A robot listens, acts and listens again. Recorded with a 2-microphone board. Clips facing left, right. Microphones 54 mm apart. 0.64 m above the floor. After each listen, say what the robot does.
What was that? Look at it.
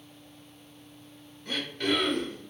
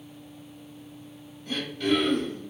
Turn 60° left.
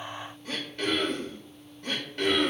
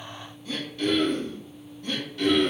Turn 60° left.
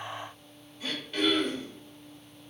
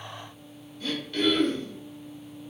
Turn 15° left.
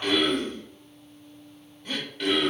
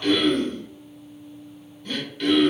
Turn 10° left.
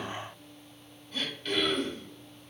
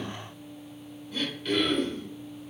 Facing the throat clearing, 1 to 2 m away.